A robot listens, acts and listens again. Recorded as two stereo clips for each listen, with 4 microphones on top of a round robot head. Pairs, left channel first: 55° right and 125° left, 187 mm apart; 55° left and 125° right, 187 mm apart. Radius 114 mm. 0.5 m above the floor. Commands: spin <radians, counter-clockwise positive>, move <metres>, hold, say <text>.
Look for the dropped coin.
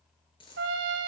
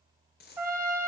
spin 0.26
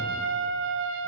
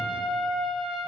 say Facing where the dropped coin came from. I can't hear it now.